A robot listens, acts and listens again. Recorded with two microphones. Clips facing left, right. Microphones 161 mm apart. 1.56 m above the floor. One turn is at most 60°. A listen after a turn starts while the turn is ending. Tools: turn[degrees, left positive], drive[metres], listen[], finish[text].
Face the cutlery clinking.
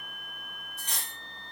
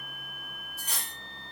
Action: turn[-30]
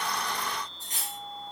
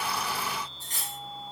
Thought: So it is at 20° left.
Action: turn[20]
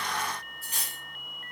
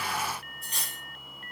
Action: finish[Found it: cutlery clinking, straight ahead, 1 to 2 m away.]